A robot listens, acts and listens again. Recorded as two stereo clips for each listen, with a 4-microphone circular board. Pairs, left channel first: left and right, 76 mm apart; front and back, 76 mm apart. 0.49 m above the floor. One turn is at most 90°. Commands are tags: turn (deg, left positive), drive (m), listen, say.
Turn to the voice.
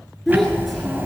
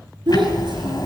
<turn deg="90"/>
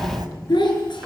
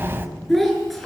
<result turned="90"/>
<turn deg="90"/>
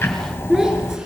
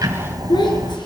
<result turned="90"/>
<turn deg="-10"/>
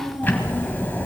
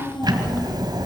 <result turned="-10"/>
<say>Facing the child speaking.</say>